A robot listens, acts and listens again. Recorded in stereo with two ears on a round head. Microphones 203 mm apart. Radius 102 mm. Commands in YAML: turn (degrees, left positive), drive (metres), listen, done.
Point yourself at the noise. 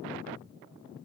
listen: true
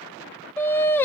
turn: 30
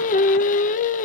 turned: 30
turn: 140
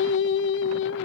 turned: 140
turn: 60
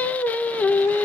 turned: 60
turn: 10
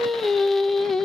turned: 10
done: "Facing the singing, under 1 m away."